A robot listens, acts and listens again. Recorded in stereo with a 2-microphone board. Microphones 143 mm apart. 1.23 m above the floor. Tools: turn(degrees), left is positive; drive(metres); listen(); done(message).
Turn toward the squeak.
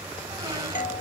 turn(degrees=-25)
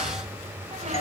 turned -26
turn(degrees=-125)
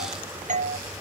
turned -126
listen()
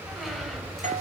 done("Facing the squeak, 2 to 4 m away.")